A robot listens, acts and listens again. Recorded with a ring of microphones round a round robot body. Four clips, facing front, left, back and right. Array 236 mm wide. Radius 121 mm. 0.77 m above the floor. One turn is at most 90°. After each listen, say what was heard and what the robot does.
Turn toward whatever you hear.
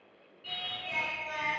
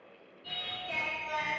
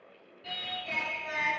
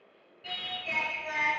The singing: 125° right. Turn 90° right.
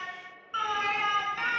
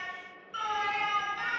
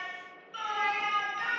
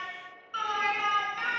The singing is now 20° right. Turn 20° right.
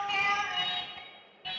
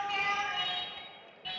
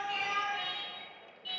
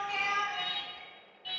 The singing is now 25° left. Turn 25° left.
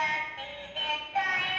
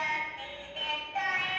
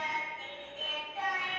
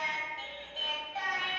The singing is now 10° left. Turn 10° left.
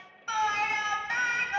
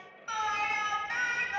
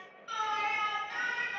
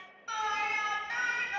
Found it: singing, straight ahead.